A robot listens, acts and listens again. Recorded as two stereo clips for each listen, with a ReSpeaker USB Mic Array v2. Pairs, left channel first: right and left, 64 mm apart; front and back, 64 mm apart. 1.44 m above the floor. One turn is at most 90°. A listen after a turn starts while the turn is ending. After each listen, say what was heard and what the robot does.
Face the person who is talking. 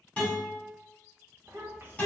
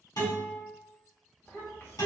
The child speaking: 45° left. Turn 45° left.
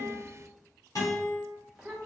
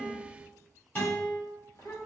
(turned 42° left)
Found it: a child speaking, straight ahead, 1 to 2 m away.